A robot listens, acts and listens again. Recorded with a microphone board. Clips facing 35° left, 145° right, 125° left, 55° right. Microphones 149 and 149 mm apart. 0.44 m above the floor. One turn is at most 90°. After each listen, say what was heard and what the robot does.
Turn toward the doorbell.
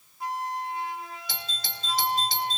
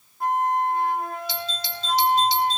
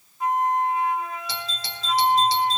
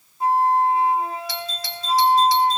The doorbell: 65° left. Turn 65° left.
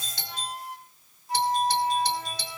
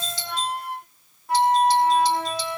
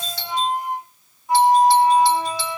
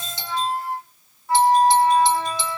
The doorbell is now 10° left. Turn 10° left.
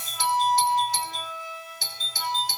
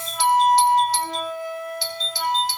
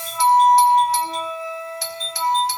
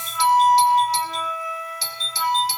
Found it: a doorbell, straight ahead.